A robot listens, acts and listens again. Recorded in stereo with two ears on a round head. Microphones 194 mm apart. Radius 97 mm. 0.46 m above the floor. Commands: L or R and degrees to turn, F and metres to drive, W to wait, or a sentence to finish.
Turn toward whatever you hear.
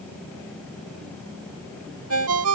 R75
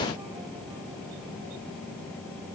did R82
W
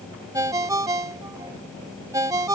R15
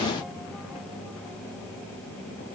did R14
W
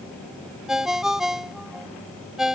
Facing the ringtone.